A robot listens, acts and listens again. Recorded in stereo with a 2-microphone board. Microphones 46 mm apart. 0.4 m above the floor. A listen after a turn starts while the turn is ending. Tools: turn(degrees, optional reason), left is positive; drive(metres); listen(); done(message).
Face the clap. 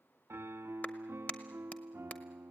turn(degrees=35, reason="The clap: about 35° left or 145° left.")
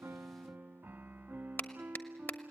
turn(degrees=105, reason="So it is at 105° left.")
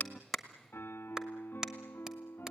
turn(degrees=-15, reason="The clap is now 15° right.")
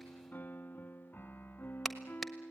done("Facing the clap.")